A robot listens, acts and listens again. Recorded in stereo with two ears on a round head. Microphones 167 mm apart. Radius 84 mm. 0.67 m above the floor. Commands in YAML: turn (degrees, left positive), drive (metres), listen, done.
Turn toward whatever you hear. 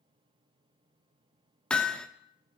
turn: 30
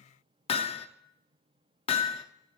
turn: 145
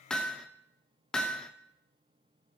done: "Found it: hammering, straight ahead."